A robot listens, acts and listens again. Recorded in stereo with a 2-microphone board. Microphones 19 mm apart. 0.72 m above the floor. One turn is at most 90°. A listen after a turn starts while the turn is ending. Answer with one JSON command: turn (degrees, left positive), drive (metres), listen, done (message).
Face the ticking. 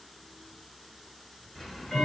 {"turn": 30}
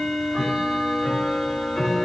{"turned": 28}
{"turn": 90}
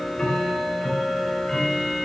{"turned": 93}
{"turn": 30}
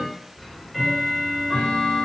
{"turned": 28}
{"done": "Found it: ticking, straight ahead, over 4 m away."}